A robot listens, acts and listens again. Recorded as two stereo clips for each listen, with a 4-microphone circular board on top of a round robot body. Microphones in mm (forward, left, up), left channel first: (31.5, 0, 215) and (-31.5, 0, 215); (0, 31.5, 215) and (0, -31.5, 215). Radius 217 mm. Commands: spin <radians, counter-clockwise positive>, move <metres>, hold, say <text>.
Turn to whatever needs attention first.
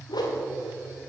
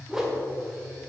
hold
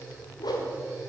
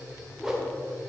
hold
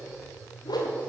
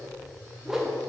say I can't make out anything urgent, only a whoosh.